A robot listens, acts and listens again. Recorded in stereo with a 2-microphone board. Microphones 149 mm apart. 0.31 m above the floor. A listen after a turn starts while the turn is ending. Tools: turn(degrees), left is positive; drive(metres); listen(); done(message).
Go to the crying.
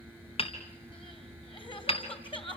turn(degrees=35)
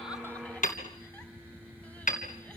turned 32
listen()
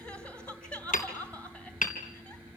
turn(degrees=10)
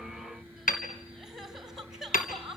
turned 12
drive(metres=1.0)
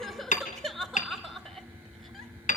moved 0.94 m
drive(metres=1.0)
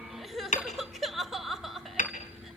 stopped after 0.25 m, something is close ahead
done("Arrived at the crying, straight ahead.")